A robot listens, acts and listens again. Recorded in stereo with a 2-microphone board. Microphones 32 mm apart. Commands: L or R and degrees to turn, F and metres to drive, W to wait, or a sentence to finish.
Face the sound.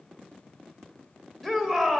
L30
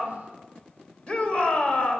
L145
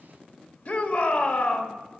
L65
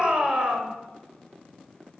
R30
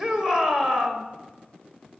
R15
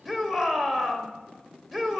Found it: a shout, straight ahead.